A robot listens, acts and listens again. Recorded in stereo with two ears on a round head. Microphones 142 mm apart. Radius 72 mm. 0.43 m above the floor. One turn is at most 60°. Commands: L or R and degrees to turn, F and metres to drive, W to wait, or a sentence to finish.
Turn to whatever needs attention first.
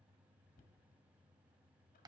W
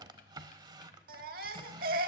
R60
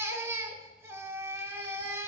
R20
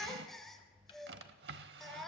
Facing the baby crying.